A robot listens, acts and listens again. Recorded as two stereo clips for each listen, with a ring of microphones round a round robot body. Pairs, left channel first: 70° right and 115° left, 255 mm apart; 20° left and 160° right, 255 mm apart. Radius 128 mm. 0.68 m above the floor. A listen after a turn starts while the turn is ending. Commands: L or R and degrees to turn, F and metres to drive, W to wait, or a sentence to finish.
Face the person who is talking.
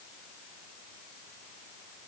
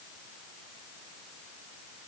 W
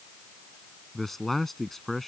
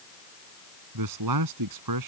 R155
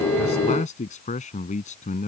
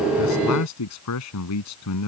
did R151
Found it: a man speaking, straight ahead.